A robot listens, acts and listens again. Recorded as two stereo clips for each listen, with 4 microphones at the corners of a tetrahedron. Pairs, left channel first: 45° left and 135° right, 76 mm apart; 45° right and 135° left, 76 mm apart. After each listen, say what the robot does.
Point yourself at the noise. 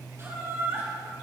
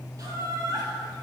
Turn 170° left.
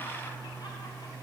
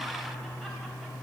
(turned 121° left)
Turn 50° left.
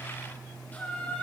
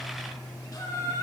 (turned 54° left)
Turn 25° right.
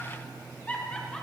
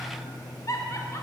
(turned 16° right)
Turn 25° right.
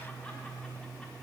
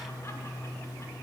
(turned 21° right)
Keep listening.
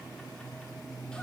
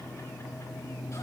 Keep listening.
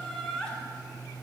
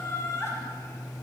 Turn 30° right.
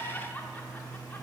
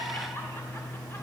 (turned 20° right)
Turn 10° right.
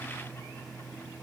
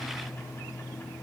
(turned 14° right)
Keep listening.
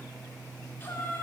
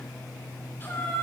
Facing the laughter, 1 to 2 m away.